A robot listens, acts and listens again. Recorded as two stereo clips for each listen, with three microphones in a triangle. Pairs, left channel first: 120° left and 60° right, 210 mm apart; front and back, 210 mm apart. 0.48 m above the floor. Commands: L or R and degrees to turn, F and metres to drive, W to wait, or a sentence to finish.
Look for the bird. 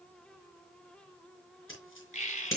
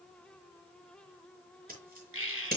L175
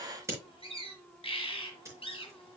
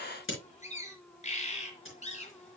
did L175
L60
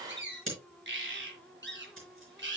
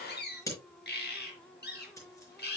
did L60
R35
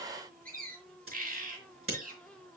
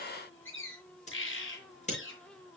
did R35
R15
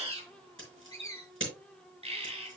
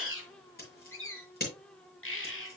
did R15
Found it: a bird, straight ahead.